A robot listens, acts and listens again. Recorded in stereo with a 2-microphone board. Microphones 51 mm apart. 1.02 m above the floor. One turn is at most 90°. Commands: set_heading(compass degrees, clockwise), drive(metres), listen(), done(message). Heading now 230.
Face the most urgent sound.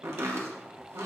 listen()
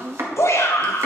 set_heading(160)
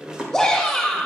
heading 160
done("Facing the shout.")